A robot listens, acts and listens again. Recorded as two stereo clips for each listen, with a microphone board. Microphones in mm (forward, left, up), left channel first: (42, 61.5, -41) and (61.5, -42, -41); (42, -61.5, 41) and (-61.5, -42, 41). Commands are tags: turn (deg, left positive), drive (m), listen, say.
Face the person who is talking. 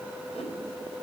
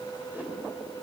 <listen/>
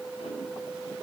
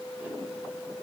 <listen/>
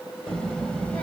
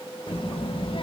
<turn deg="20"/>
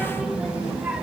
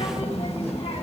<say>Facing the child speaking.</say>